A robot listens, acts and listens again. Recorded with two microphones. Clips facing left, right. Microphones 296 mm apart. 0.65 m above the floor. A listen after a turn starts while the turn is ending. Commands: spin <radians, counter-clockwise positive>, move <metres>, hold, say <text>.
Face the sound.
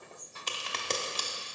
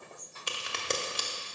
spin -0.52
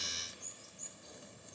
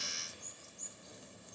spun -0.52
hold
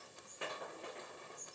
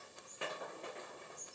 say I heard a crack, but can't make it out now. It was about 20° left or 140° right.